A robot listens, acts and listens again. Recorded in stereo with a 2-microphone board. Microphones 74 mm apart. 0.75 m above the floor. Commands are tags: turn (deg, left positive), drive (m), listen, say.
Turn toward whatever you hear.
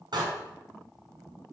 <turn deg="-70"/>
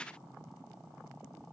<listen/>
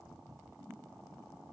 <say>I heard a door slam, but can't make it out now. It was about straight ahead or 40° right.</say>